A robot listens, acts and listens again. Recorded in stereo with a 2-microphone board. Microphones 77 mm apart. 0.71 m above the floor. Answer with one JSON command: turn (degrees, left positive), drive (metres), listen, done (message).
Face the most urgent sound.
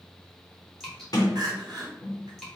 {"turn": -65}
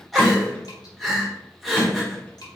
{"done": "Facing the crying, 1 to 2 m away."}